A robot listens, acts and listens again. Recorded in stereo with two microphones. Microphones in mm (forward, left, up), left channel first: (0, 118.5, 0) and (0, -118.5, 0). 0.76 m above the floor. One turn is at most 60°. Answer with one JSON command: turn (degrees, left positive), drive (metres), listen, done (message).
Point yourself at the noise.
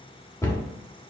{"turn": 30}
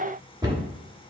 {"turn": -20}
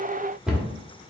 {"done": "Facing the cupboard door, 1 to 2 m away."}